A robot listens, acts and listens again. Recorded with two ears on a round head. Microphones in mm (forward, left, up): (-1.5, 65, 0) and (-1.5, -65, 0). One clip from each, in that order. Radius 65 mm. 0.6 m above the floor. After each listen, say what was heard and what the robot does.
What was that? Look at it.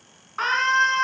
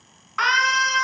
The scream: about 45° right or 135° right. Turn 45° right.
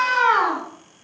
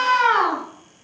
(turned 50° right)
Facing the scream.